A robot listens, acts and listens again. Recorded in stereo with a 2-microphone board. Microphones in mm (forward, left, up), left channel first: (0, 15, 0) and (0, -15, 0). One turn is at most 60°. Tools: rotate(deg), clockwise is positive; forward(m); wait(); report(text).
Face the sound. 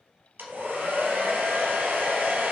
rotate(60)
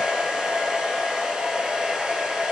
rotate(25)
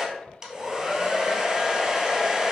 rotate(20)
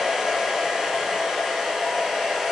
report("Facing the hair dryer.")